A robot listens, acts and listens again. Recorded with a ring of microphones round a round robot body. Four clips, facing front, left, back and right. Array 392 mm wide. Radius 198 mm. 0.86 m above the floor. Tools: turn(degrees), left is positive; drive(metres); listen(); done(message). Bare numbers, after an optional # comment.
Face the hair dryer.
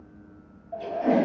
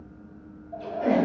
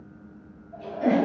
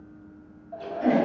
# The hair dryer: 25° right.
turn(-25)
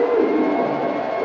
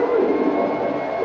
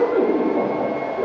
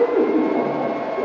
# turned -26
done("Found it: a hair dryer, straight ahead, 1 to 2 m away.")